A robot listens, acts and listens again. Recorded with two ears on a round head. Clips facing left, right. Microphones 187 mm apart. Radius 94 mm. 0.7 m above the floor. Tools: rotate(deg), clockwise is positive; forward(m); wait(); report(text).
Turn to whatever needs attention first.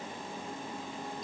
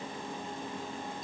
wait()
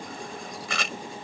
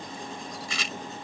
wait()
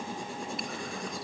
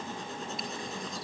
report("I can't make out anything urgent to turn to.")